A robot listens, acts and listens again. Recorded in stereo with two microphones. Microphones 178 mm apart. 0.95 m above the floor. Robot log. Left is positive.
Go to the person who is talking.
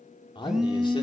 note: The man speaking: about 30° left or 150° left.
cmd yaw +30
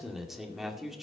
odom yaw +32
cmd fwd 1.0
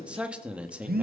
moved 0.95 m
cmd fwd 1.0
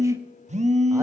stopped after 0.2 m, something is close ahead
cmd idle
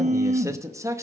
note: The man speaking is now 20° right.
cmd yaw -20
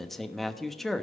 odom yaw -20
end: I am next to the man speaking.